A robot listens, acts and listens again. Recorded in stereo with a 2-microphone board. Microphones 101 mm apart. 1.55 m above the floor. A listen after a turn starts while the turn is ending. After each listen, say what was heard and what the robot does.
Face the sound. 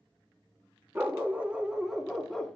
Turn 30° left.
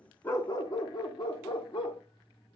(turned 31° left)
So it is at 125° left. Turn 125° left.
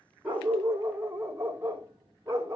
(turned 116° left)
The dog barking is now 25° right. Turn 25° right.
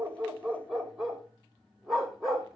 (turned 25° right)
Found it: a dog barking, straight ahead.